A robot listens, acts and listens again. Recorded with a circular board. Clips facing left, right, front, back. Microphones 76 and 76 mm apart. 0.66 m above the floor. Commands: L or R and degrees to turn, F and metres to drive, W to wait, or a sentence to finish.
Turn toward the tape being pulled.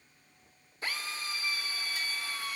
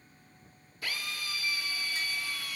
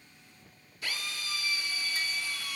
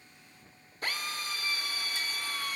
W
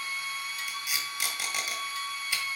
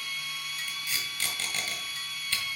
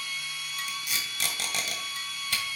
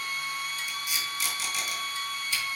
L15
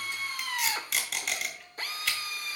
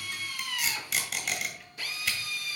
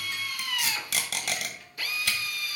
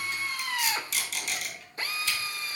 Found it: tape being pulled, straight ahead, 2 to 4 m away.